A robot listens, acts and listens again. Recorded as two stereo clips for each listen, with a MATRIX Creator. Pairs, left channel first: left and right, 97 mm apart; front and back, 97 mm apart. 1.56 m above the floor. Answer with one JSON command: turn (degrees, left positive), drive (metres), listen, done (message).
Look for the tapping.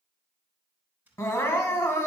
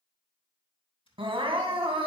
{"turn": -20}
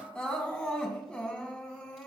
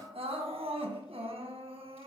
{"listen": true}
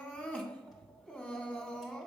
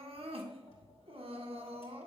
{"done": "Facing the tapping, 2 to 4 m away."}